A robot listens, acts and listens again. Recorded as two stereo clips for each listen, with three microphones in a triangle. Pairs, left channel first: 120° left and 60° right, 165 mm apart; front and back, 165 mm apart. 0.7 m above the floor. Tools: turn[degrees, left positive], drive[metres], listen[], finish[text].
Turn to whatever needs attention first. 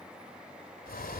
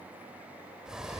Action: listen[]
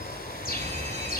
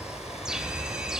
Thought: The fire alarm: 95° right.
Action: turn[-95]
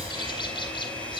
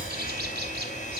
Action: listen[]
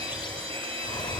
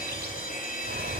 Thought: The fire alarm is now 10° right.
Action: turn[-10]
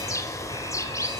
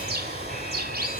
Action: listen[]
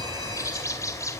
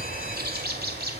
Action: listen[]
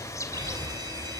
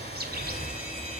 Action: finish[Facing the fire alarm, 2 to 4 m away.]